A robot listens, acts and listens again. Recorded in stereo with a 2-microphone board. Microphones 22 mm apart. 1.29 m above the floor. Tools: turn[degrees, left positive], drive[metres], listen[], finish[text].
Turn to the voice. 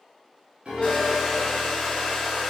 Action: listen[]
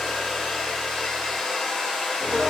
Action: listen[]
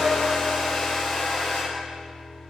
Action: finish[I can't make out anyone speaking, only a hair dryer and a piano.]